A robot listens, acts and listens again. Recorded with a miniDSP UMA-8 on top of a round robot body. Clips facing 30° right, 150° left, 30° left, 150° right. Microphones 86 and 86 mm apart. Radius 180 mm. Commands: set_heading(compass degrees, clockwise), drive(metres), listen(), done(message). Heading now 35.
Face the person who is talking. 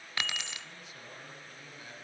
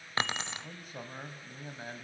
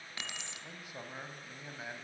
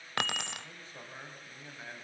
set_heading(285)
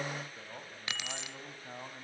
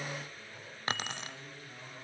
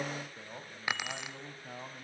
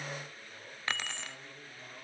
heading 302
set_heading(287)
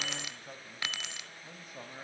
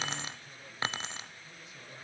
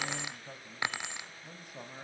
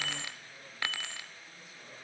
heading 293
done("Found it: a man speaking, straight ahead.")